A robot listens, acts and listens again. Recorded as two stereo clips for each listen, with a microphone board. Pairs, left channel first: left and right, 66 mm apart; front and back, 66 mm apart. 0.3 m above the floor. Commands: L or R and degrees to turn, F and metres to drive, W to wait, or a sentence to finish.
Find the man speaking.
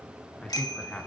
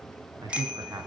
L160
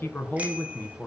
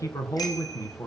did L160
L30
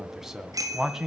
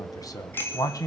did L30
Facing the man speaking, 2 to 4 m away.